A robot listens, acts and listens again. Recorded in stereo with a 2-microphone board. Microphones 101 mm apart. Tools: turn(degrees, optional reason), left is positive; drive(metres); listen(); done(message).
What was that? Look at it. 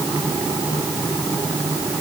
listen()
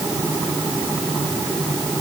listen()
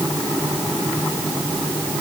done("I can't make out anything.")